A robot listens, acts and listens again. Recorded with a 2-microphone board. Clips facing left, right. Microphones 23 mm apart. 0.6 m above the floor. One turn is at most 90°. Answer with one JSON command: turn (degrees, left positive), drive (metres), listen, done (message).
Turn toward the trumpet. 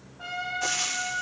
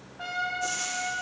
{"turn": -35}
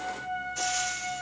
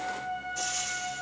{"done": "Found it: a trumpet, straight ahead, 2 to 4 m away."}